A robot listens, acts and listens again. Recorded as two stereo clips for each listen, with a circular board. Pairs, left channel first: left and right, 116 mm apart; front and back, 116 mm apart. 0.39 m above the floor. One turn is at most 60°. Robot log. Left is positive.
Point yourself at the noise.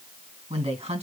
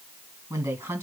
note: The woman speaking: 110° right.
cmd yaw -60
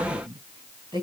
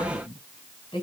note: The woman speaking is now 40° right.
cmd yaw -40
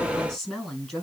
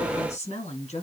end: Facing the woman speaking, over 4 m away.